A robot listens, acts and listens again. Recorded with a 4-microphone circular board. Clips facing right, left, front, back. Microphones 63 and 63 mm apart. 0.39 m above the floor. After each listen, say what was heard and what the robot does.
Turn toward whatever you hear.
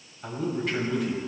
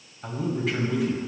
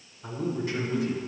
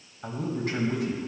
The man speaking: straight behind. Turn 180° left.
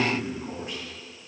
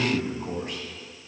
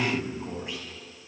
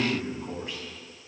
The man speaking is now 65° left. Turn 65° left.
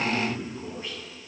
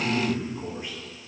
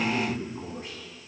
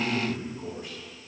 The man speaking is now 20° left. Turn 20° left.
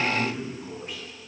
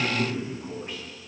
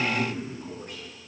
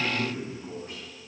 Found it: a man speaking, straight ahead.